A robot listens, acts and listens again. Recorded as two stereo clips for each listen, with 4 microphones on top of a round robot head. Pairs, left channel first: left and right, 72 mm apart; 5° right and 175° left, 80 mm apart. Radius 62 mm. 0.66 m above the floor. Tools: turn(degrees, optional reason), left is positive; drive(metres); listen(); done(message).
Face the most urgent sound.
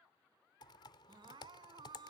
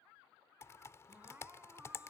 turn(degrees=-110, reason="The crying: 110° right.")
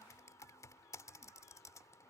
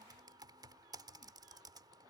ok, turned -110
listen()
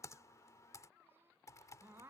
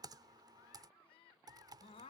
turn(degrees=-25, reason="The crying is now 25° right.")
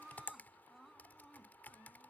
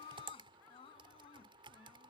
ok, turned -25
done("Facing the crying.")